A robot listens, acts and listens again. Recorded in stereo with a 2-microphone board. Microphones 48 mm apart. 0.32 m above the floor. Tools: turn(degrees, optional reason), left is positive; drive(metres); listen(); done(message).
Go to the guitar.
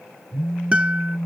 turn(degrees=-30, reason="The guitar: about 30° right or 150° right.")
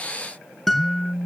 drive(metres=1.0)
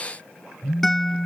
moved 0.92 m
drive(metres=1.0)
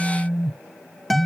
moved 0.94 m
drive(metres=1.0)
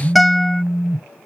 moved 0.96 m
drive(metres=1.0)
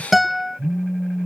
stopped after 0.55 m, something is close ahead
done("I am next to the guitar.")